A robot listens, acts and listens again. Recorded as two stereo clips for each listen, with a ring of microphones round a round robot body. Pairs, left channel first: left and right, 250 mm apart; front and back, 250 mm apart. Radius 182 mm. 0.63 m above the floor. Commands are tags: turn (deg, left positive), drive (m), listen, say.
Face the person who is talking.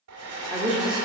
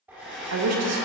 <turn deg="-175"/>
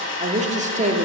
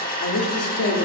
<turn deg="-30"/>
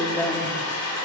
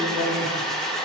<say>Found it: a woman speaking, straight ahead.</say>